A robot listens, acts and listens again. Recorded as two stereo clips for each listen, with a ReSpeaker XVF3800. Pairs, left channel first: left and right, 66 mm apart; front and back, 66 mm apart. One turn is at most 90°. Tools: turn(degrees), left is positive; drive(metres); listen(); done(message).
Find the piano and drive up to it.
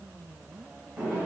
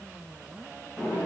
listen()
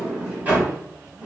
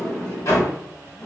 listen()
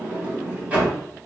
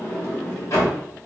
done("I can't make out a piano, only a sliding door.")